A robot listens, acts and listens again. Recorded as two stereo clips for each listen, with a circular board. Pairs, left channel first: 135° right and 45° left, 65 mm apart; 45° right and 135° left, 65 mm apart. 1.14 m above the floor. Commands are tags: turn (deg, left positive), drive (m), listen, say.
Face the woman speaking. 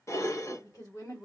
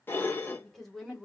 <turn deg="-130"/>
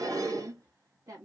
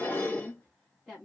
<turn deg="40"/>
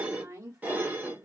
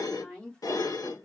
<turn deg="20"/>
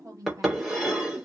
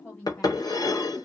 <turn deg="15"/>
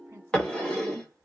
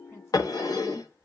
<listen/>
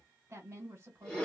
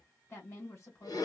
<say>Found it: a woman speaking, straight ahead, 1 to 2 m away.</say>